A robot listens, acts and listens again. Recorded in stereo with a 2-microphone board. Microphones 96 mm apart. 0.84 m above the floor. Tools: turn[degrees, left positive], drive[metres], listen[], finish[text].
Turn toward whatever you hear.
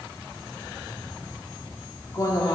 Thought: The woman speaking: about 35° left or 145° left.
Action: turn[35]
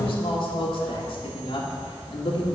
Thought: So it is at 105° left.
Action: turn[105]
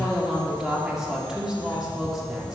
Thought: The woman speaking is now 10° right.
Action: turn[-10]
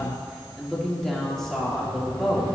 Action: finish[Facing the woman speaking, 1 to 2 m away.]